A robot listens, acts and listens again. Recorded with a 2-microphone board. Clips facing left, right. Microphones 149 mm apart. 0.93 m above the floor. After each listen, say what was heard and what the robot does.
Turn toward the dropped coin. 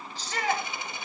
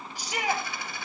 The dropped coin: about 20° left or 160° left. Turn 20° left.
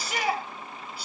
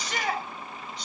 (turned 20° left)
Keep listening.
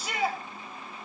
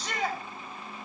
I heard a dropped coin, but can't make it out now. It was about straight ahead or 140° left.